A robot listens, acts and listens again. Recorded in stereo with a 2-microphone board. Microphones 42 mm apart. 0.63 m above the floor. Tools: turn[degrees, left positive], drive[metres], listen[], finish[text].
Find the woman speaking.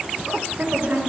Thought: The woman speaking: about 45° right or 135° right.
Action: turn[-45]
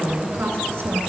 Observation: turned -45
Thought: So it is at 80° right.
Action: turn[-80]
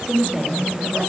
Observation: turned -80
Thought: The woman speaking is now 15° right.
Action: turn[-15]
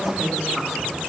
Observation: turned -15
Action: finish[Facing the woman speaking, 2 to 4 m away.]